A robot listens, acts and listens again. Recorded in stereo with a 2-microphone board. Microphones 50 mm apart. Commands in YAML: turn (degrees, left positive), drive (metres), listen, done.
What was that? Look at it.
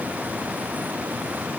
listen: true
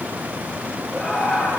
turn: 30
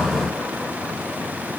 listen: true
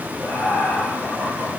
turn: 150
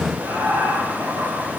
turn: -35
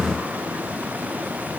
listen: true
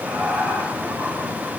turn: -25
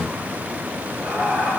done: "Found it: laughter, straight ahead, over 4 m away."